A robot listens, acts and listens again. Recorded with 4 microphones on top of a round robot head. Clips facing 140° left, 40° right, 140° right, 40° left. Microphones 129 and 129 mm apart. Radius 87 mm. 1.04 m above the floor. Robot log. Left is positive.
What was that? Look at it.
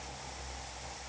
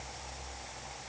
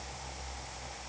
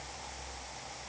cmd idle
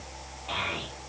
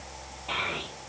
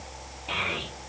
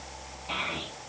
note: The child speaking: 130° right.
cmd yaw -130
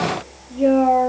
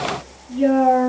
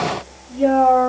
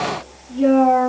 note: The child speaking is now 40° right.
cmd yaw -40
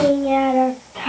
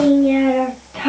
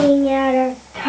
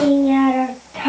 note: The child speaking is now 30° right.
cmd yaw -30
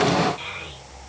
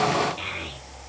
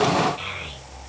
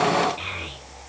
note: The child speaking is now 15° right.
cmd yaw -15
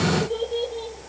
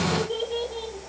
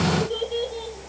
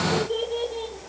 end: Found it: a child speaking, straight ahead.